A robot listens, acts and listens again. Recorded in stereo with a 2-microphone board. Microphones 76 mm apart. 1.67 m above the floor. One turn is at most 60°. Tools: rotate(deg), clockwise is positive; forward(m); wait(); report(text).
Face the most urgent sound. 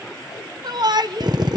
rotate(60)
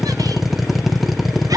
rotate(55)
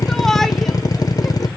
report("Found it: a shout, straight ahead, 1 to 2 m away.")